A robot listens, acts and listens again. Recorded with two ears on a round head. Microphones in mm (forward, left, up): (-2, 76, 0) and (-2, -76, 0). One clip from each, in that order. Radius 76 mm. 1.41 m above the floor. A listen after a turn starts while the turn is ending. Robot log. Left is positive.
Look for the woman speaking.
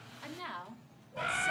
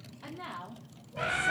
note: The woman speaking: about 45° left or 135° left.
cmd yaw +45
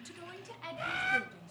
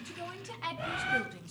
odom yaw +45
note: So it is at 30° right.
cmd yaw -30
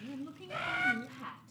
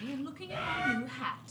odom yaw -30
note: The woman speaking is now 45° right.
cmd yaw -45
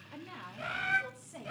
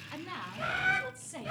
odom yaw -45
note: The woman speaking is now 20° right.
cmd yaw -20
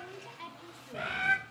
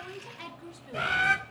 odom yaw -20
note: The woman speaking is now 15° right.
cmd yaw -15
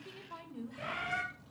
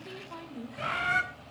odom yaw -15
end: Facing the woman speaking, 2 to 4 m away.